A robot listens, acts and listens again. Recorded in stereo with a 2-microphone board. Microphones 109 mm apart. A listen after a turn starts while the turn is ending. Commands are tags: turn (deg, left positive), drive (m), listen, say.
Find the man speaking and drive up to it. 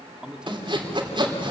<turn deg="-30"/>
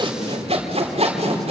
<listen/>
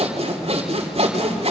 <listen/>
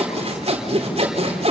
<say>I heard a man speaking, but can't make it out now. It was about 20° left or 140° right. I did not reach it.</say>